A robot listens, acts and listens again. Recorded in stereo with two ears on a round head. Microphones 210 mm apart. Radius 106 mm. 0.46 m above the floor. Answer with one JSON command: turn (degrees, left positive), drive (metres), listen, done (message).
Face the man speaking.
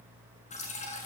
{"listen": true}
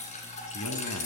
{"turn": 90}
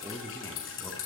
{"turn": 15}
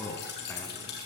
{"turn": 10}
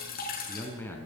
{"turn": 10}
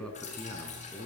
{"done": "Facing the man speaking."}